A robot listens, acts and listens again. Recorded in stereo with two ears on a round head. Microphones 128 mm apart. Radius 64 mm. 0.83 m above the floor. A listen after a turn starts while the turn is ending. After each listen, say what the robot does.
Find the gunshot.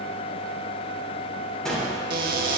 Turn 30° left.
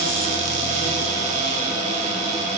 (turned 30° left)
Keep listening.
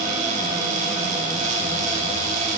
I heard a gunshot, but can't make it out now. It was about 25° right or 145° left.